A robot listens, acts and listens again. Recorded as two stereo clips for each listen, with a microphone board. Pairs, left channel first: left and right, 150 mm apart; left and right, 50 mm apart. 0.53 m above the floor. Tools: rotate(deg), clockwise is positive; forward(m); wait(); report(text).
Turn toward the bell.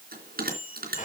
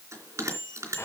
rotate(90)
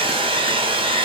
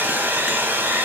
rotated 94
wait()
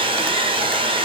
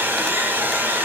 wait()
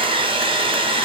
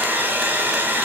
report("Facing where the bell came from. I can't hear it now.")